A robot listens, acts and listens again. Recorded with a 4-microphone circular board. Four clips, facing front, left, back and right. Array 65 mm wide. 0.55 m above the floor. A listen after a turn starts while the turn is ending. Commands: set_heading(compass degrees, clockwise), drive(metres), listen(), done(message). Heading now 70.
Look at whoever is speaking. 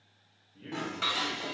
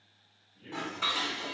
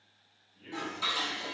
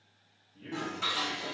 set_heading(100)
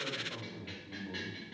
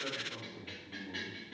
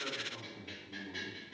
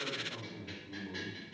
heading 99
done("Found it: a man speaking, straight ahead, 2 to 4 m away.")